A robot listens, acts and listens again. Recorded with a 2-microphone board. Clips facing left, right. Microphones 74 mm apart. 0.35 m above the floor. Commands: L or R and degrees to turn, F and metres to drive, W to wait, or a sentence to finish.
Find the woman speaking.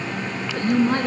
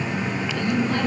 L45
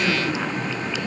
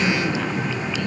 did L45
L20
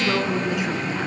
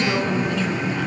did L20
L15
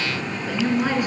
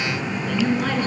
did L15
L15
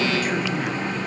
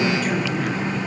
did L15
Found it: a woman speaking, straight ahead, 2 to 4 m away.